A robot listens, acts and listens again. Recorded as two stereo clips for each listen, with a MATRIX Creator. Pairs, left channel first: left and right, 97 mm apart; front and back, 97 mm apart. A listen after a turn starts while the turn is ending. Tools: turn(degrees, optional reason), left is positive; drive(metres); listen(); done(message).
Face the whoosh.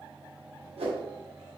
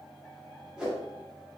turn(degrees=-100, reason="The whoosh: 100° right.")
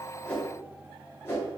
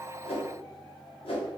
turn(degrees=25, reason="The whoosh is now 25° left.")
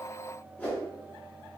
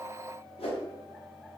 turn(degrees=15, reason="The whoosh is now 15° left.")
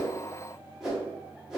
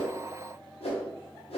done("Facing the whoosh.")